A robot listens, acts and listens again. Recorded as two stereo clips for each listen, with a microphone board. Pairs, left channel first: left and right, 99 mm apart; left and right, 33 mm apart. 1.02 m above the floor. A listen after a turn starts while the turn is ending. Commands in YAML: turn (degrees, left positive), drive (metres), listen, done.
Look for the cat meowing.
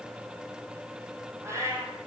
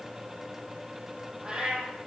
turn: -30
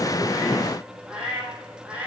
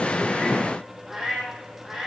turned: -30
turn: -10
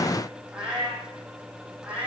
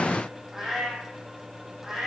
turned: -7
turn: -10
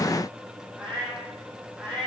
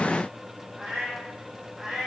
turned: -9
turn: -10
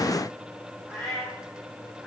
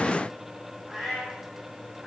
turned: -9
done: "Found it: a cat meowing, straight ahead."